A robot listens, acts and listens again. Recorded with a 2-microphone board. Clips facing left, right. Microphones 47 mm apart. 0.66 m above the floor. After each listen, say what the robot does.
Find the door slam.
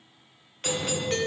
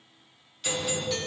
Turn 15° left.
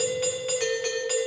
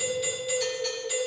Keep listening.
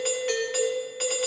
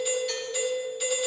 I heard a door slam, but can't make it out now. It was about straight ahead or 150° left.